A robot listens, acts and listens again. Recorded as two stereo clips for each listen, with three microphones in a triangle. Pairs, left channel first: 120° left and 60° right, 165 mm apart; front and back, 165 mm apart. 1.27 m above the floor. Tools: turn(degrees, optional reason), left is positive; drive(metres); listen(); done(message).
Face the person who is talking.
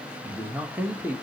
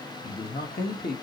turn(degrees=20, reason="The man speaking: 20° left.")
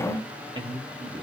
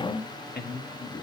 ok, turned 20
done("Found it: a man speaking, straight ahead, 1 to 2 m away.")